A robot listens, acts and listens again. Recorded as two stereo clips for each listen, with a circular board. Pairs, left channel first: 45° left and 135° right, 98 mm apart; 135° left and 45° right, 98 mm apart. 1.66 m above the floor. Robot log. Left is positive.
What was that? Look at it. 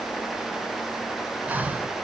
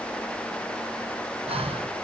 note: The breathing: 60° right.
cmd yaw -60
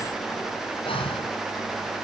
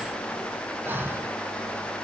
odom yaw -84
note: The breathing is now 25° left.
cmd yaw +25
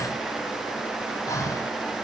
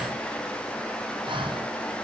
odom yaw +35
note: The breathing is now 10° right.
cmd yaw -10
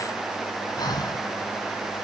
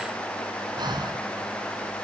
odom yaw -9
end: Found it: breathing, straight ahead, 1 to 2 m away.